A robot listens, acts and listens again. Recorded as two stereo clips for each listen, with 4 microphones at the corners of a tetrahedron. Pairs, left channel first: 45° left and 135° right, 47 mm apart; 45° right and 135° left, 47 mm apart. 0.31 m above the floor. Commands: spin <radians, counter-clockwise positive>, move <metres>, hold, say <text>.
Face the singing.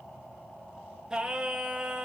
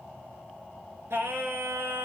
spin 2.71
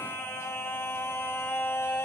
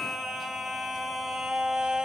spin 1.13
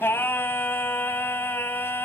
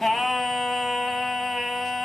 spin 0.79
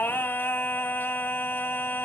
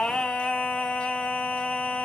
spin 0.26
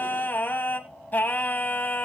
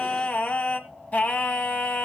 say Found it: singing, straight ahead.